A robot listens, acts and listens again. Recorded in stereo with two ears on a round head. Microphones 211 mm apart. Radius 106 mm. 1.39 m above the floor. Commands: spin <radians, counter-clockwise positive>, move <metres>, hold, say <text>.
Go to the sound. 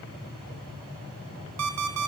spin -1.31
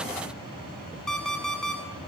move 1.0
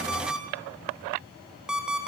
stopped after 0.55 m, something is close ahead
say Blocked. The alarm clock is further on, straight ahead.